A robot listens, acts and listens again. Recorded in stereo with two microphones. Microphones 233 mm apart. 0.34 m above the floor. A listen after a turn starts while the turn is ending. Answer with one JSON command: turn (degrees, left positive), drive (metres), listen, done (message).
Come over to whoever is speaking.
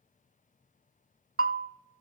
{"listen": true}
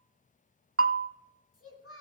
{"turn": 75}
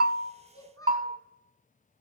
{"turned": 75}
{"turn": 15}
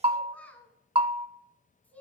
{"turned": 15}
{"drive": 1.0}
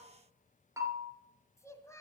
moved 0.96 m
{"turn": 15}
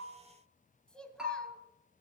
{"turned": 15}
{"drive": 1.0}
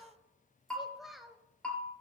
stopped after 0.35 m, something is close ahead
{"done": "Arrived at the child speaking, straight ahead."}